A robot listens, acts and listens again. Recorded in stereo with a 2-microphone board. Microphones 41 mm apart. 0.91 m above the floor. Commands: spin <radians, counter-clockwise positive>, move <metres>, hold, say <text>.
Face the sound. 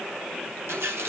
spin -1.31
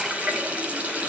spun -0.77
spin -0.52
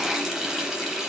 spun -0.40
spin -0.17
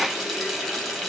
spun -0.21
say Found it: a running tap, straight ahead, 2 to 4 m away.